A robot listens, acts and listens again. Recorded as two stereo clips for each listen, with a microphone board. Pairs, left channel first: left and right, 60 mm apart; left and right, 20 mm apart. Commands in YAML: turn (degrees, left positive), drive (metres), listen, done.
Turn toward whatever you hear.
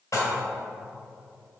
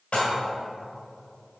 turn: 60
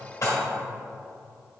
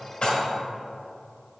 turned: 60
turn: 60
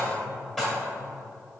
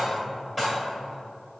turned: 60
done: "Facing the dishes clattering."